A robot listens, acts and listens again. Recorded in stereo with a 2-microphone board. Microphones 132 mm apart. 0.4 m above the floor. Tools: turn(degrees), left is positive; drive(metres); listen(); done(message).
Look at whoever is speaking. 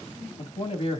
turn(degrees=45)
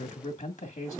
turn(degrees=85)
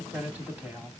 turn(degrees=-15)
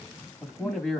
done("Facing the man speaking, 2 to 4 m away.")